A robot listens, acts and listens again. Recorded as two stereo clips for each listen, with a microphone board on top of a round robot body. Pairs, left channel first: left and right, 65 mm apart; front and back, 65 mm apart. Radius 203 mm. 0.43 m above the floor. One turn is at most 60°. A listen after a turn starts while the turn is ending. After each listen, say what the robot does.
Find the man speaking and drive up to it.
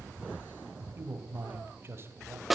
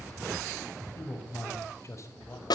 Turn 40° right.
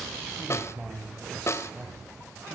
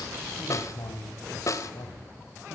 Drive 1.0 m forward.
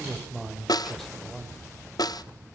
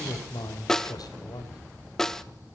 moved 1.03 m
Drive 1.0 m forward.
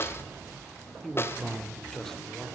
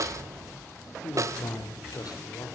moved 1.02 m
Drive 1.0 m forward.
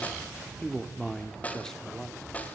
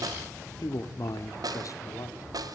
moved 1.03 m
Turn 10° left.
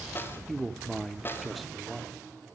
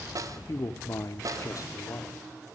Drive 1.0 m forward.
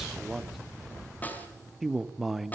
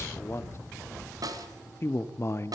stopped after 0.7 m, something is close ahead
Arrived at the man speaking, straight ahead.